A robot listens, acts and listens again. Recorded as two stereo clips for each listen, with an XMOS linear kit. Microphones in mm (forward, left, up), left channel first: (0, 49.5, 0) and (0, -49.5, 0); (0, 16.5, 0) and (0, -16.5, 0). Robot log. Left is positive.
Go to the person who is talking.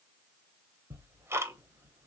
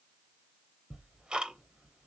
cmd idle
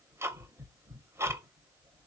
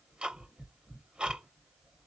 cmd idle
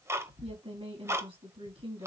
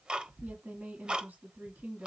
note: The woman speaking: about 70° right or 110° right.
cmd yaw -70
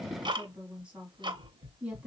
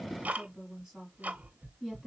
note: So it is at 15° right.
cmd yaw -15
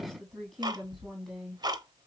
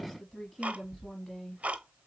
cmd fwd 1.0
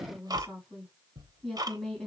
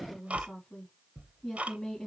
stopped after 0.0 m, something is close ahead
end: Blocked. The woman speaking is further on, straight ahead.